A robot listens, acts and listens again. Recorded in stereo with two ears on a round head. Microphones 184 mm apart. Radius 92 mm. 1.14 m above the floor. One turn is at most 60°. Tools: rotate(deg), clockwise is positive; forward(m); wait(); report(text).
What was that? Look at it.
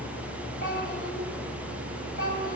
rotate(-45)
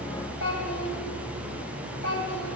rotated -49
rotate(-60)
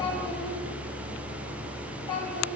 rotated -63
rotate(-25)
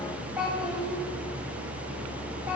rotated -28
report("Found it: a child speaking, straight ahead.")